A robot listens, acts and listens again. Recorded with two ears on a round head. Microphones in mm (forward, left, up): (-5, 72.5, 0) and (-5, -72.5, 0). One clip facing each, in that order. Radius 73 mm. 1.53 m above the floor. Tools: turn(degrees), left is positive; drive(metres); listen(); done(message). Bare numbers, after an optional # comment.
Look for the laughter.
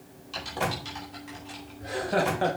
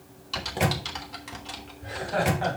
# The laughter: about 45° left or 135° left.
turn(45)
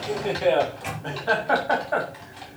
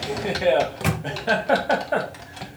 # So it is at 30° right.
turn(-30)
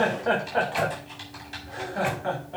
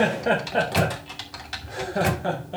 # The laughter is now 40° right.
turn(-40)
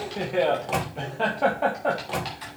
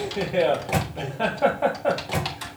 done("Facing the laughter.")